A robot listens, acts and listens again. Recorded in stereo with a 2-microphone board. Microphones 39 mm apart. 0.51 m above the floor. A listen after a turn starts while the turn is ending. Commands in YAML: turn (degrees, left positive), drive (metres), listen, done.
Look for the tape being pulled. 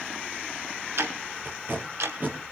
turn: -50
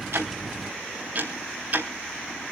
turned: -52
listen: true
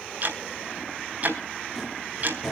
done: "Facing the tape being pulled."